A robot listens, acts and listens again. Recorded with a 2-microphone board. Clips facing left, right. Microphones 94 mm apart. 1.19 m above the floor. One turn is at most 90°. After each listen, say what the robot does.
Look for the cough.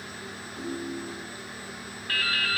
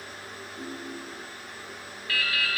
Keep listening.
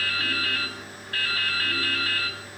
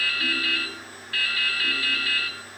Keep listening.
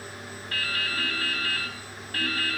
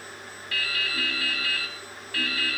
I can't make out a cough, only a ringtone and dripping.